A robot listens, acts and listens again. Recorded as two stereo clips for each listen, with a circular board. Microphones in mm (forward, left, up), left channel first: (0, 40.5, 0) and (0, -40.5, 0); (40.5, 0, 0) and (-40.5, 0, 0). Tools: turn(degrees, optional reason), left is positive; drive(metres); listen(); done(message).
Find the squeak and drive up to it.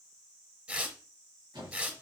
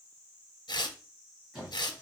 turn(degrees=-90, reason="The squeak: 90° right.")
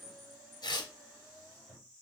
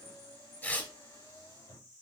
drive(metres=1.0)
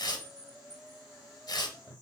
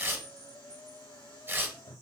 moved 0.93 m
turn(degrees=-10, reason="The squeak is now 10° right.")
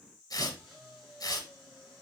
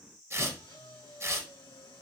drive(metres=1.0)
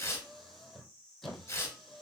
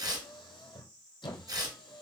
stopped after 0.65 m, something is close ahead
done("Arrived at the squeak, straight ahead.")